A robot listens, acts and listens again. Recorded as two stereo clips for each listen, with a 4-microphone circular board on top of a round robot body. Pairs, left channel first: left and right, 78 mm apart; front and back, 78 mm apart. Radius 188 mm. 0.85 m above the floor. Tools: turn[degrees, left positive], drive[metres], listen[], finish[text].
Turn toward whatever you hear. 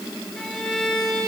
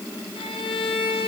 Action: finish[Facing the violin.]